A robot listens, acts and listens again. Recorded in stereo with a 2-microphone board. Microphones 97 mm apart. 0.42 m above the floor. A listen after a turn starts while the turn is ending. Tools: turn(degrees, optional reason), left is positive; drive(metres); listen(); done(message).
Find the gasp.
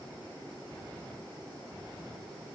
listen()
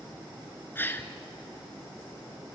turn(degrees=25, reason="The gasp: about 25° left or 155° left.")
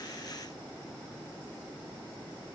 listen()
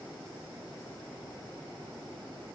done("I heard a gasp, but can't make it out now. It was about straight ahead or 130° left.")